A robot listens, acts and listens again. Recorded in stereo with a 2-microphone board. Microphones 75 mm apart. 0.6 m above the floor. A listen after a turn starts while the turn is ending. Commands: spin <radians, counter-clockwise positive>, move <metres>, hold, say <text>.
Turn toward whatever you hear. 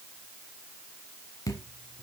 spin 0.87
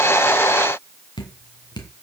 spin 1.40
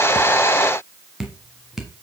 say Facing the dripping, 1 to 2 m away.